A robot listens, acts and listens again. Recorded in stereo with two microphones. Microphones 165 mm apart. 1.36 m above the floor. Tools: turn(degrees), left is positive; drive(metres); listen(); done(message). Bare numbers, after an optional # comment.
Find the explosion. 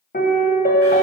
listen()
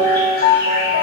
listen()
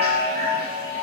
done("I can't make out an explosion to turn to.")